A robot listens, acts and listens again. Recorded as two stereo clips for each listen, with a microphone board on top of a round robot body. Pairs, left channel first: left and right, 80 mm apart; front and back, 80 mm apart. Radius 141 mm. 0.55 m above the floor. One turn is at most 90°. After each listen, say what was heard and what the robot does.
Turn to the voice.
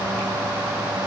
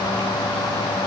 Keep listening.
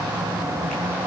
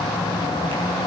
Keep listening.
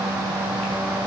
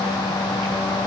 I can't make out anyone speaking to turn to.